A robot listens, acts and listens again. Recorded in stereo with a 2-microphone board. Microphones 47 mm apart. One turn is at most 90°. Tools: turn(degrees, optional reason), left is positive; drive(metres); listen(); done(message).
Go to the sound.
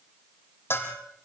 turn(degrees=55, reason="The bell: about 55° left or 125° left.")
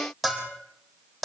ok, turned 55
drive(metres=1.0)
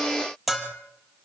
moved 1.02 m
drive(metres=1.0)
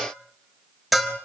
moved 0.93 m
drive(metres=1.0)
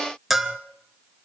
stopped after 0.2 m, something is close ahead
done("Arrived at the bell, straight ahead.")